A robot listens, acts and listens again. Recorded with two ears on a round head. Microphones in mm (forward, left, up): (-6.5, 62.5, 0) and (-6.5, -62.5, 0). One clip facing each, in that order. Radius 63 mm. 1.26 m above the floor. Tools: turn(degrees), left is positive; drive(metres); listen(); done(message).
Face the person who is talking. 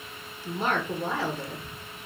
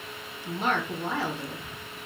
turn(degrees=35)
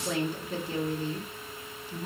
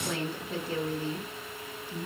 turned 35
done("Found it: a woman speaking, straight ahead, 1 to 2 m away.")